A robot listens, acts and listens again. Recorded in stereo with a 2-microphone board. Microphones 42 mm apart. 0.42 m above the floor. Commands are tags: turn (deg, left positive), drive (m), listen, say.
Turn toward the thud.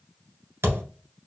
<turn deg="-90"/>
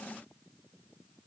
<say>I heard a thud from this way, but can't make it out now.</say>